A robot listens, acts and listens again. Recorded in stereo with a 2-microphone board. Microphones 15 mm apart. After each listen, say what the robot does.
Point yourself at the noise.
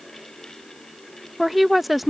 Turn 30° right.
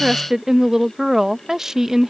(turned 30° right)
Turn 140° right.
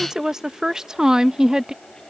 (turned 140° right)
Turn 60° right.
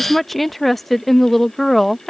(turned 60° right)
Turn 15° left.
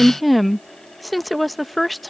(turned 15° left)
Facing the woman speaking.